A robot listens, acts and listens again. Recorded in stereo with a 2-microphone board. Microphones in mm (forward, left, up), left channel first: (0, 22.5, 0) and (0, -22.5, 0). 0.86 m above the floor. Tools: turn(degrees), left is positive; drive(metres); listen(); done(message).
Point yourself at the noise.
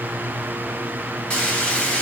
turn(degrees=25)
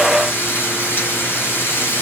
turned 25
turn(degrees=130)
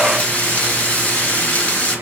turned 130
turn(degrees=40)
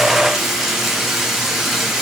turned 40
done("Found it: frying, straight ahead, 2 to 4 m away.")